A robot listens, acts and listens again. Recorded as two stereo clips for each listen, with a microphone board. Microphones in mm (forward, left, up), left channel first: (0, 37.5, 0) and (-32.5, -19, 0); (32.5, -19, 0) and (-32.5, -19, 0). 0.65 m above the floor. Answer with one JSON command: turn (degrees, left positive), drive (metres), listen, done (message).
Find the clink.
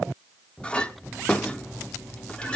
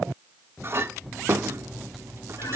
{"turn": 135}
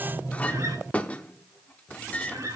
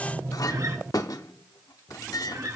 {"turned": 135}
{"turn": -10}
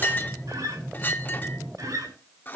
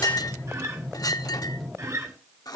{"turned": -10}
{"done": "Facing the clink."}